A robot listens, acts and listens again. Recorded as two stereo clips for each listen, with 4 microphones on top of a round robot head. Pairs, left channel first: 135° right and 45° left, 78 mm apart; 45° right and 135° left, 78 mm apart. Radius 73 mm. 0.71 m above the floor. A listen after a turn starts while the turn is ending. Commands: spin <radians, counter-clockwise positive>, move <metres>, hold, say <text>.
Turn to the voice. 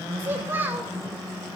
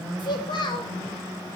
spin -0.35
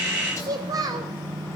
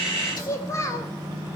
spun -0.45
say Facing the child speaking, 2 to 4 m away.